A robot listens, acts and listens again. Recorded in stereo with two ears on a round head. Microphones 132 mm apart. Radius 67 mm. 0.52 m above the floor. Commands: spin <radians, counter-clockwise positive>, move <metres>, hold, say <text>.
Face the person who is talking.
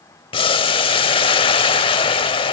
hold
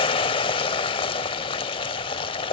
hold
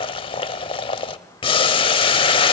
say I can't make out anyone speaking, only boiling.